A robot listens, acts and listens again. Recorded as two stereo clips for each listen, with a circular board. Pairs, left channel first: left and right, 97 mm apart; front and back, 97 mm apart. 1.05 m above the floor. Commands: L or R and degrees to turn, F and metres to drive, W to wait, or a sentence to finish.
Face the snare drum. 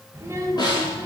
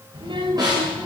L135
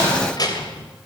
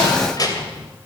W
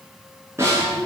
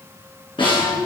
R30
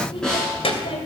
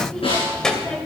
Found it: a snare drum, straight ahead, over 4 m away.